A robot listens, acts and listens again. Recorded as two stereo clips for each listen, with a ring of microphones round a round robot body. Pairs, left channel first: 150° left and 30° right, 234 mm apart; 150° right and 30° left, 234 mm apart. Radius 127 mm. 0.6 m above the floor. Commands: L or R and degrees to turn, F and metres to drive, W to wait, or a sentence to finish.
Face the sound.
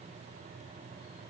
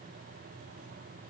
W
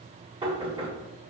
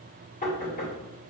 R95
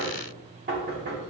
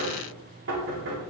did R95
L10
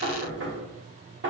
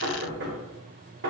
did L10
Found it: knocking, straight ahead.